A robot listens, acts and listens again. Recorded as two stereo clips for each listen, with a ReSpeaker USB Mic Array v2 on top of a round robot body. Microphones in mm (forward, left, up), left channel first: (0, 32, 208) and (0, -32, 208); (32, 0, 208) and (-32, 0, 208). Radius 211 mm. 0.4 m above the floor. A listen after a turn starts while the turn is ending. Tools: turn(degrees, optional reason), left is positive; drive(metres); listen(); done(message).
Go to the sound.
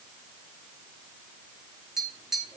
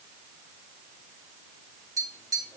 turn(degrees=-175, reason="The tapping: 175° right.")
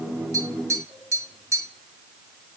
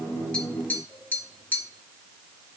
turn(degrees=-60, reason="The tapping is now 60° right.")
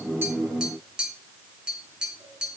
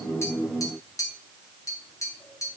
turn(degrees=-15, reason="The tapping is now 15° right.")
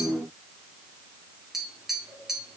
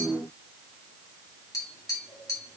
drive(metres=1.0)
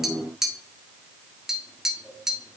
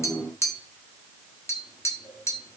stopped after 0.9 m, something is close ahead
turn(degrees=-10, reason="The tapping is now 10° right.")
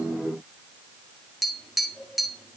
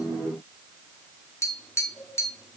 done("I am next to the tapping.")